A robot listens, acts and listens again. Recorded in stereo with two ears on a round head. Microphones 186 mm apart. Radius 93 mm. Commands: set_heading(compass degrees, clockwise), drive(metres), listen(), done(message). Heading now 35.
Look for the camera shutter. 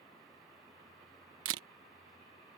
set_heading(105)
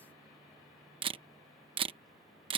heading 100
set_heading(125)
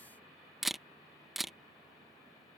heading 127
done("Found it: a camera shutter, straight ahead.")